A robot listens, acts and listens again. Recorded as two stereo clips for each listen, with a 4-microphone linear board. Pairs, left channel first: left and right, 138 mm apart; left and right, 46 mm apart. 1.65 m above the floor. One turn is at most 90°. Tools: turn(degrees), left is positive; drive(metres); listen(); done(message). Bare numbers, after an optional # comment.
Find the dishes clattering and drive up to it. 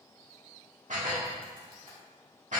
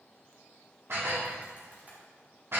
# The dishes clattering: about 65° right or 115° right.
turn(-65)
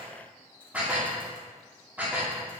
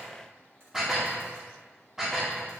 # So it is at 10° right.
turn(-10)
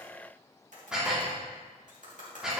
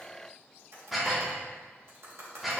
drive(1.0)
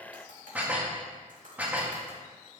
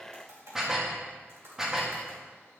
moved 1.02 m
# The dishes clattering is now 15° right.
turn(-15)
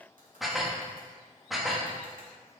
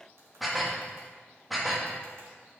drive(1.0)
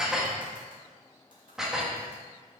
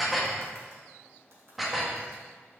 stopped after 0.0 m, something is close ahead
done("I am next to the dishes clattering.")